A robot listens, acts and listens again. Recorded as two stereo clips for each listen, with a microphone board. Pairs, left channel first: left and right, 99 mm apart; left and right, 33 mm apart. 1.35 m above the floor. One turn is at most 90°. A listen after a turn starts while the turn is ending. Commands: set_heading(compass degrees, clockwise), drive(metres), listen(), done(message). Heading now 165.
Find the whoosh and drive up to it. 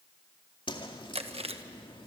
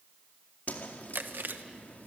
set_heading(110)
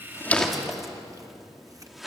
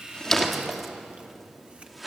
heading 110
drive(1.0)
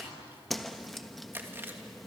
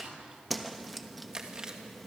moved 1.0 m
drive(1.0)
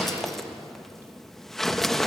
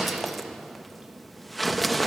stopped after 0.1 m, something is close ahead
done("Arrived at the whoosh, straight ahead.")